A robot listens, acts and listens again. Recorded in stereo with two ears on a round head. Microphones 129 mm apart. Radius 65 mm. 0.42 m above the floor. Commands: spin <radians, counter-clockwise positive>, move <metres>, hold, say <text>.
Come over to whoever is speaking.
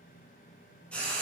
hold
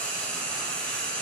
hold
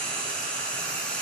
say I can't make out anyone speaking, only frying.